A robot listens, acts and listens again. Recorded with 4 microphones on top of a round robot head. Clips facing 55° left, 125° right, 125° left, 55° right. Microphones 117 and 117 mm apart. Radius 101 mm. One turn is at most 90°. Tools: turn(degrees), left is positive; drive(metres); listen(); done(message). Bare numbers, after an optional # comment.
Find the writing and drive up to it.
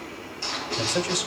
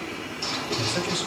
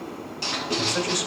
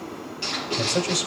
# The writing: 165° left.
turn(90)
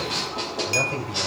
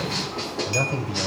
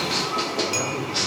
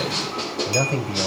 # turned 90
# The writing is now 125° left.
turn(90)
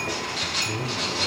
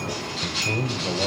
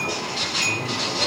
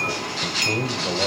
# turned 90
# The writing is now 55° left.
turn(55)
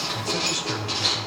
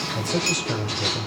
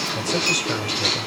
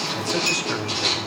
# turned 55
drive(1.0)
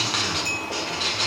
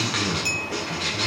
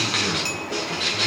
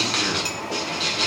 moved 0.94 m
drive(1.0)
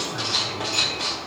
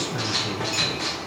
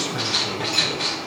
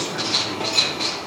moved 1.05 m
# The writing is now 10° right.
turn(-10)
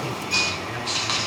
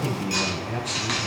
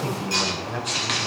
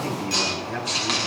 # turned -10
drive(1.0)
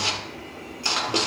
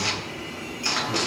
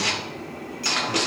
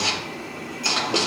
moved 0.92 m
drive(1.0)
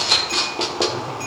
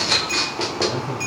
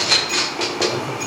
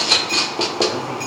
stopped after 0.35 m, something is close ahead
done("I am next to the writing.")